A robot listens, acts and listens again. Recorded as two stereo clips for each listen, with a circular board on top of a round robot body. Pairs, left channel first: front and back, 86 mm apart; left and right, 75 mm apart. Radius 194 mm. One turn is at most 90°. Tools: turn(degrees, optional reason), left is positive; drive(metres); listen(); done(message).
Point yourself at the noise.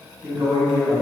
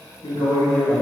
turn(degrees=90, reason="The man speaking: 120° left.")
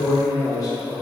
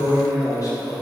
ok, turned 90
turn(degrees=55, reason="The man speaking is now 55° left.")
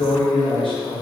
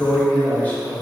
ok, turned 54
turn(degrees=25, reason="The man speaking is now 25° left.")
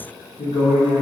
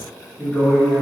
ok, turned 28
turn(degrees=10, reason="The man speaking is now 10° left.")
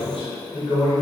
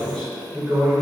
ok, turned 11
turn(degrees=10, reason="The man speaking is now 10° left.")
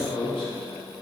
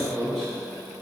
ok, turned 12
done("Facing the man speaking, 1 to 2 m away.")